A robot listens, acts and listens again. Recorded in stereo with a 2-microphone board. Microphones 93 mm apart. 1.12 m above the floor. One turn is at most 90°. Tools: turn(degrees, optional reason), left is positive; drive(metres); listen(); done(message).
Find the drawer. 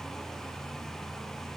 listen()
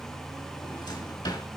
turn(degrees=50, reason="The drawer: about 50° left or 130° left.")
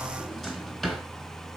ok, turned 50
done("Facing the drawer, 2 to 4 m away.")